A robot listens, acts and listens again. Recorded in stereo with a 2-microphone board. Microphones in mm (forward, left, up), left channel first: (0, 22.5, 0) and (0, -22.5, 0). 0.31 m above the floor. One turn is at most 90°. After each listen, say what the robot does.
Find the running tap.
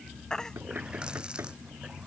Turn 20° right.
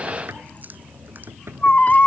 Turn 90° right.
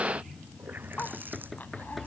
Turn 50° right.
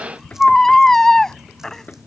Keep listening.
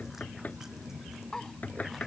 Keep listening.
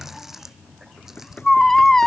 Turn 10° right.
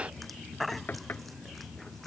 Keep listening.
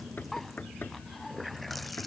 Facing the running tap.